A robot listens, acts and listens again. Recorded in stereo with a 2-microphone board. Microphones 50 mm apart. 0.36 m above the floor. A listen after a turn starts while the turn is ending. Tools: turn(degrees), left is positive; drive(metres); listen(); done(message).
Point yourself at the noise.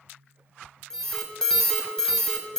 turn(degrees=30)
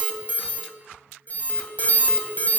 turn(degrees=135)
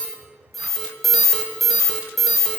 done("Facing the alarm, 1 to 2 m away.")